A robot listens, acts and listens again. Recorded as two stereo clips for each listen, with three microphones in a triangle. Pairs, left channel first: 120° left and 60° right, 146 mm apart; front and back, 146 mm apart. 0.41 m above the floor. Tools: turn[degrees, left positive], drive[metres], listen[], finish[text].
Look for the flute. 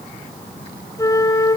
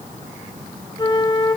Thought: The flute: 55° left.
Action: turn[55]
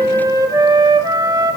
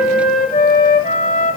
Action: finish[Facing the flute, 1 to 2 m away.]